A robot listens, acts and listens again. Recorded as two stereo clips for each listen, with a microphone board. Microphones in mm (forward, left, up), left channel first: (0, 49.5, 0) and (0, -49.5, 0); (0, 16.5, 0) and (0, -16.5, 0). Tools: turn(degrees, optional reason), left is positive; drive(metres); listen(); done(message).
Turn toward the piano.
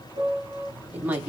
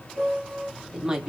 turn(degrees=-45, reason="The piano: about 45° right or 135° right.")
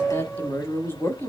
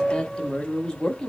turn(degrees=-10, reason="So it is at 10° right.")
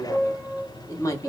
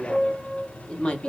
done("Found it: a piano, straight ahead, under 1 m away.")